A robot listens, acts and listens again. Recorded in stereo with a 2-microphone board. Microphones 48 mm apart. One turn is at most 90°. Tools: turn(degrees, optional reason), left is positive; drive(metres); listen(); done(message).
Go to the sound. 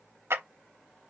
turn(degrees=-65, reason="The clap: about 65° right or 115° right.")
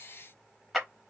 drive(metres=1.0)
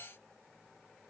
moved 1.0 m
listen()
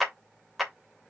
drive(metres=1.0)
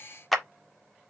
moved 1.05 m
drive(metres=1.0)
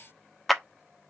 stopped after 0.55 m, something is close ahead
done("Arrived at the clap, straight ahead.")